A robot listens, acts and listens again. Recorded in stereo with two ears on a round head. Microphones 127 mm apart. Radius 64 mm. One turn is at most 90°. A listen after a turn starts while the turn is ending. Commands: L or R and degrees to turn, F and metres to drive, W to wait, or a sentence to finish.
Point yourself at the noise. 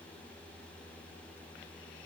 W
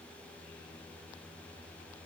W
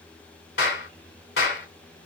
L90
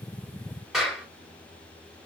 Found it: a clap, straight ahead, 2 to 4 m away.